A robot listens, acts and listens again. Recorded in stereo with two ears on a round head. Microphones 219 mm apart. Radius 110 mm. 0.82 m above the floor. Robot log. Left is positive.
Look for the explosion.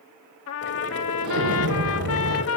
cmd yaw -90
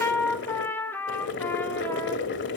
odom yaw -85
end: I heard an explosion from this way, but can't make it out now.